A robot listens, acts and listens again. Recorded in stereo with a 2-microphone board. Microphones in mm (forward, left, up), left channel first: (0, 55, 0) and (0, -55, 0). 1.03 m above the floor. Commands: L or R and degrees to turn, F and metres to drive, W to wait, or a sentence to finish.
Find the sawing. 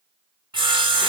R50
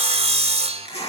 R80
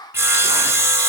R25
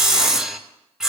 Found it: sawing, straight ahead.